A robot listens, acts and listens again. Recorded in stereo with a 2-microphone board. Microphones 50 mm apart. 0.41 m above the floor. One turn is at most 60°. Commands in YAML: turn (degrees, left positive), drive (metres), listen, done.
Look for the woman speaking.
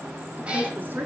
turn: -35
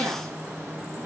listen: true
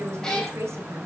turn: -60
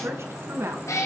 turn: -60
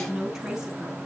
turn: -10
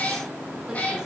listen: true
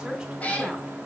turn: -10
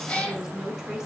done: "Facing the woman speaking."